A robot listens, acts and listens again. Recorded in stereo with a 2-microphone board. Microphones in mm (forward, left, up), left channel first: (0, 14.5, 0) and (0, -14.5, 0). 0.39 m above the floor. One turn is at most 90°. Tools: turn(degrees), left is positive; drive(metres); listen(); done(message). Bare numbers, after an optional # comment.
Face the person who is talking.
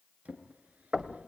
listen()
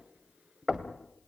listen()
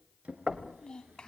# The child speaking: about 20° left or 160° left.
turn(20)
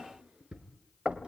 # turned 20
listen()
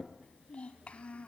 # So it is at 140° left.
turn(90)
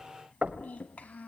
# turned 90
# The child speaking is now 70° left.
turn(70)
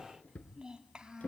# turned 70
# The child speaking is now 25° right.
turn(-25)
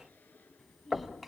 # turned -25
done("Facing the child speaking, 2 to 4 m away.")